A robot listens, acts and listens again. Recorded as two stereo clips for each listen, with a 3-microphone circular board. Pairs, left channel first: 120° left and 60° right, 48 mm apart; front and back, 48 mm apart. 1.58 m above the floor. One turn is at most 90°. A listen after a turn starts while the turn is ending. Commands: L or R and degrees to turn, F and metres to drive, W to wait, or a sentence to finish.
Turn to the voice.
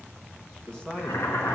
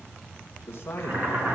L45
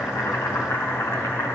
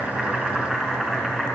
W
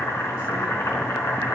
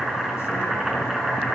W
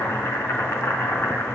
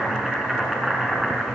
Facing where the man speaking came from. I can't hear it now.